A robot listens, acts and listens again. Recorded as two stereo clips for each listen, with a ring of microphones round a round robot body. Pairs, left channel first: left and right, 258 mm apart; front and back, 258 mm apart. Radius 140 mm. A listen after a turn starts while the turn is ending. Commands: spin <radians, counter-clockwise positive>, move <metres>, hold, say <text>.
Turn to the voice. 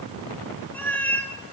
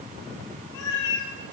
hold
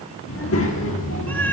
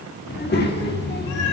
spin 0.87
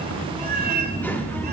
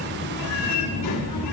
say Facing the child speaking, 1 to 2 m away.